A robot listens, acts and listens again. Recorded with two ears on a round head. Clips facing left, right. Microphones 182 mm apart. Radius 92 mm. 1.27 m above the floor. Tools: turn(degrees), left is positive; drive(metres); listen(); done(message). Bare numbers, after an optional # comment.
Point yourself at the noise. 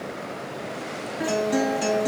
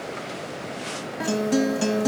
# The guitar: about 50° right or 130° right.
turn(-50)
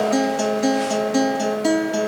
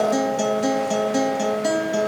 done("Found it: a guitar, straight ahead, 1 to 2 m away.")